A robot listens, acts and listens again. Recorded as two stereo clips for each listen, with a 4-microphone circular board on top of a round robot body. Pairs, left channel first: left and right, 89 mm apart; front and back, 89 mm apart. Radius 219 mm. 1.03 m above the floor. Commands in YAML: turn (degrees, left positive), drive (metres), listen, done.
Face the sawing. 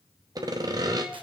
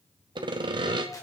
turn: -140
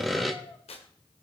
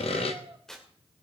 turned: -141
done: "Found it: sawing, straight ahead."